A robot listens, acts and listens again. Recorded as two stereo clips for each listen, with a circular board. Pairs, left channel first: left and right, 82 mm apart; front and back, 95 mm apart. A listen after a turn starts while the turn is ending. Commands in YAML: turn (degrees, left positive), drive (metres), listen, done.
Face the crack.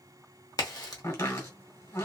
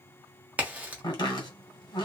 turn: 110
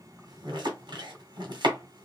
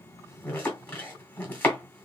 done: "I heard a crack from this way, but can't make it out now."